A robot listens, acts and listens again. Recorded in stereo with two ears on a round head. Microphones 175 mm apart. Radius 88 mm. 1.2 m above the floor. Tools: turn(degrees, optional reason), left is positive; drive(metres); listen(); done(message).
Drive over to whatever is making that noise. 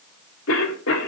turn(degrees=90)
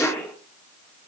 drive(metres=1.0)
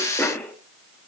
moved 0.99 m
turn(degrees=10, reason="The cough is now 10° left.")
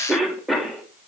drive(metres=1.0)
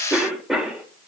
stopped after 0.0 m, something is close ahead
done("Something is in my way. I am facing the cough but have not reached it.")